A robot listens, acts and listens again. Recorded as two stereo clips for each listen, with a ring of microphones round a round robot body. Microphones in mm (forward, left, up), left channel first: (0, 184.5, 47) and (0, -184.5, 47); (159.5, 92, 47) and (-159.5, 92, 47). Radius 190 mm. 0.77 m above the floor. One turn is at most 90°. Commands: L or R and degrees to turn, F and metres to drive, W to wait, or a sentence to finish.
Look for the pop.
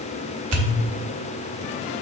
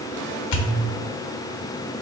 R35
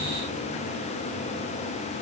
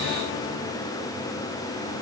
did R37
Facing where the pop came from. I can't hear it now.